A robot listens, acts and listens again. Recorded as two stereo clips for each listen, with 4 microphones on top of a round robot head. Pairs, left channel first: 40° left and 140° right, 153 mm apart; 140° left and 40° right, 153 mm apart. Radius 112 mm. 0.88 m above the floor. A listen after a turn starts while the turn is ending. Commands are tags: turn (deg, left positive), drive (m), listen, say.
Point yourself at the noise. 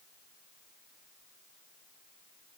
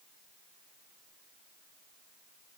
<listen/>
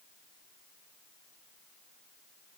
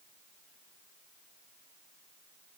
<listen/>
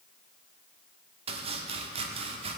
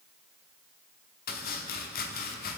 <turn deg="165"/>
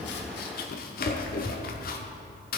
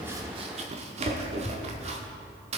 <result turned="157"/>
<turn deg="10"/>
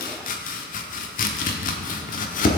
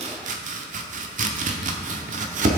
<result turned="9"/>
<say>Facing the chopping.</say>